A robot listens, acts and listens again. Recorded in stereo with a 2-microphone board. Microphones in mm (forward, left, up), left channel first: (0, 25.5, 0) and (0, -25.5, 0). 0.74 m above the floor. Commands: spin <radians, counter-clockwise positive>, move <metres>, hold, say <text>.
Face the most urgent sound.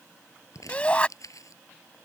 spin 0.35
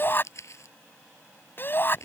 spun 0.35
spin 2.44
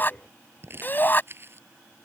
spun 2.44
spin 0.61
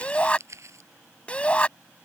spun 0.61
spin 0.35
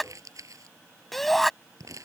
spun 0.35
say Facing the shout.